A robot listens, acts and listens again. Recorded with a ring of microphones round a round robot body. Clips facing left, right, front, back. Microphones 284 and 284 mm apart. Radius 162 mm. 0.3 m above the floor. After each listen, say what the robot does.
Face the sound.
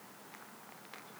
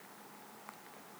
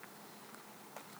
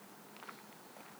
Keep listening.
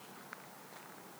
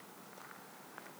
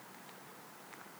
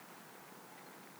Keep listening.
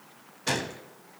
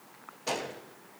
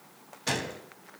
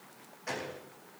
Turn 35° left.
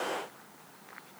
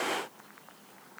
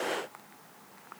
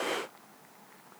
I heard a gunshot from this way, but can't make it out now.